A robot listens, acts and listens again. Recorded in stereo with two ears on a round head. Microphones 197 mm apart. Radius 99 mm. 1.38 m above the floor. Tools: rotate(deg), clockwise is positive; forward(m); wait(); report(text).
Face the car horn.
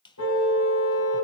rotate(-90)
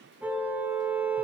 report("Facing the car horn, over 4 m away.")